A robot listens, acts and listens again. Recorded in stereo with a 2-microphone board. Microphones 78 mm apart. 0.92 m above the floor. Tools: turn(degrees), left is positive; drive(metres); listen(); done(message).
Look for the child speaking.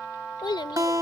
turn(degrees=90)
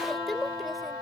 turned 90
done("Found it: a child speaking, straight ahead.")